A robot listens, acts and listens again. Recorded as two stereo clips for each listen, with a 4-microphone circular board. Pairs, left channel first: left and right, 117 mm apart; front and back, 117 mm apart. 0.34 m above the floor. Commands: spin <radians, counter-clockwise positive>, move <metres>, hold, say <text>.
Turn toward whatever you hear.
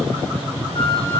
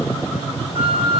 spin 2.36
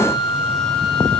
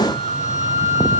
say Facing the flute, over 4 m away.